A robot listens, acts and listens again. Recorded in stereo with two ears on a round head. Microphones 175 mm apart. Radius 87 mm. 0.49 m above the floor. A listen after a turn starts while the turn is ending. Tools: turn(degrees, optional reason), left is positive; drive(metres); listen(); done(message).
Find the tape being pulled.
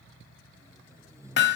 turn(degrees=-15, reason="The tape being pulled: about 15° right or 165° right.")
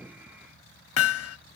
listen()
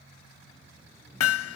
listen()
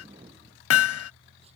turn(degrees=-145, reason="So it is at 145° right.")
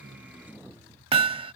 turn(degrees=-10, reason="The tape being pulled is now 10° right.")
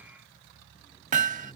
listen()
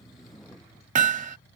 done("Found it: tape being pulled, straight ahead.")